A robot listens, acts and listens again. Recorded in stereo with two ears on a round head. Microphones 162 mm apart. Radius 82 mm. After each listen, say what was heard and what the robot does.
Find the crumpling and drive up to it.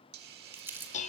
Turn 30° right.
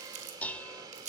So it is at 135° right. Turn 135° right.
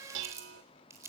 The crumpling is now 15° right. Turn 15° right.
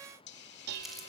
Keep listening.
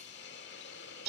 Keep listening.
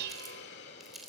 Drive 1.0 m forward.
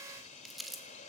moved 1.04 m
Drive 1.0 m forward.
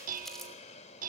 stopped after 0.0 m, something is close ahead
Something is in my way. I am facing the crumpling but have not reached it.